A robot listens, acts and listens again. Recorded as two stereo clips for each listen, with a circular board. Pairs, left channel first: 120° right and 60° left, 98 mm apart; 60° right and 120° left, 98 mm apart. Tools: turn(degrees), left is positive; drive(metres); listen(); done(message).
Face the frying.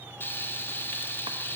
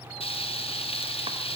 turn(degrees=-50)
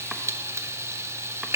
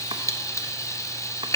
done("Found it: frying, straight ahead.")